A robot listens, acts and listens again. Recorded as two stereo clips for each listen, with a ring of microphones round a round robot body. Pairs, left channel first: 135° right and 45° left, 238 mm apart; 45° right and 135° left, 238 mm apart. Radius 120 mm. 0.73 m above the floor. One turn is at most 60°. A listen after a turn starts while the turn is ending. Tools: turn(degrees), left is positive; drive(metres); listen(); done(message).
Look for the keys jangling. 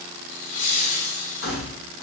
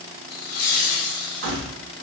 turn(degrees=60)
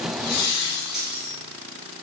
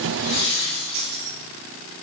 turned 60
turn(degrees=60)
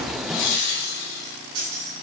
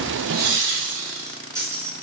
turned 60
turn(degrees=55)
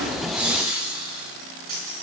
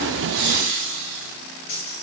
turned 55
done("Found it: keys jangling, straight ahead.")